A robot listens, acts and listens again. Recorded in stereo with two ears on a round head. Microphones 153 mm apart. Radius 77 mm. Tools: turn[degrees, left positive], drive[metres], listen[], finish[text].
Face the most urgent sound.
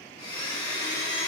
Action: listen[]
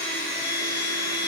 Action: listen[]
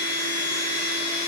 Action: finish[I can't make out anything urgent, only a blender.]